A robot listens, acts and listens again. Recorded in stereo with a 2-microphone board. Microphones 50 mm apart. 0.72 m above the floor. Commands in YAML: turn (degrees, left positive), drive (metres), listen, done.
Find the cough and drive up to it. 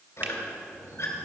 listen: true
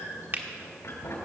listen: true
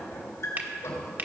done: "I can't make out a cough to turn to."